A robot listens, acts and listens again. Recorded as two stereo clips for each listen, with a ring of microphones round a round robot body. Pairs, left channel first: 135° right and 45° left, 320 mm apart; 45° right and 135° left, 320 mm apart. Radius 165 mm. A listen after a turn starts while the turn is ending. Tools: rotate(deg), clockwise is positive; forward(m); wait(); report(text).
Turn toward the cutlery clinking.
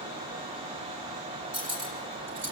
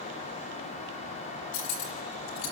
rotate(10)
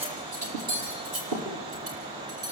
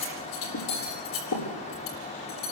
report("Found it: cutlery clinking, straight ahead.")